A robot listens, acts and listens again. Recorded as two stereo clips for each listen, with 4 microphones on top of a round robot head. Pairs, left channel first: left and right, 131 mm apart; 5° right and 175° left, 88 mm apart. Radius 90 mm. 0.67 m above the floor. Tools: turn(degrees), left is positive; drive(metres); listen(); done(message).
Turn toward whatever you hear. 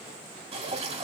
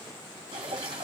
turn(degrees=-130)
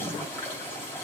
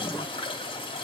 turn(degrees=15)
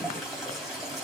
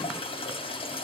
done("Found it: dripping, straight ahead, 2 to 4 m away.")